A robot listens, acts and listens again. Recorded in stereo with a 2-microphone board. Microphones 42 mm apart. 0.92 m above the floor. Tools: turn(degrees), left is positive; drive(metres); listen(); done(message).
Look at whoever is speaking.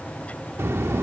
turn(degrees=-90)
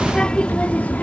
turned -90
turn(degrees=40)
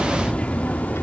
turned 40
turn(degrees=45)
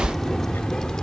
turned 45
turn(degrees=15)
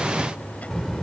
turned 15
turn(degrees=10)
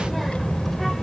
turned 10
done("Facing the child speaking.")